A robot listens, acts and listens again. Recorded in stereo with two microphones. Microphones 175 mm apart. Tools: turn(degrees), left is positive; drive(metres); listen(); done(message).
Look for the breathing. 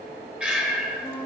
turn(degrees=-30)
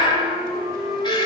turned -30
turn(degrees=25)
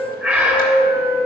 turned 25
turn(degrees=-10)
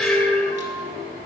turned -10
done("Facing the breathing.")